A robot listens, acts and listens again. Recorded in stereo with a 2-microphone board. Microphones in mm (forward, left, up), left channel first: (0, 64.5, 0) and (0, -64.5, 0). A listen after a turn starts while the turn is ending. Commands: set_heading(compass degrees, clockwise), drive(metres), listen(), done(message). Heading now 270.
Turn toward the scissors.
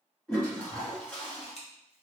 set_heading(215)
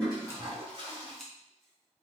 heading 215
done("Found it: scissors, straight ahead, 1 to 2 m away.")